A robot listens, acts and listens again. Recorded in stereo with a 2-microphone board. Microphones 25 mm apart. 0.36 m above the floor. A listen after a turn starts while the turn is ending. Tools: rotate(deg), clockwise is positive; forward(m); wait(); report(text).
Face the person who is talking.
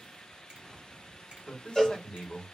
rotate(-40)
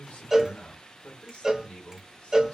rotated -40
rotate(-95)
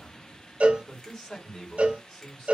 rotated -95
rotate(-40)
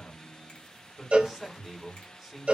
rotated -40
rotate(-10)
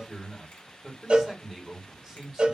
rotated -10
report("Facing the man speaking.")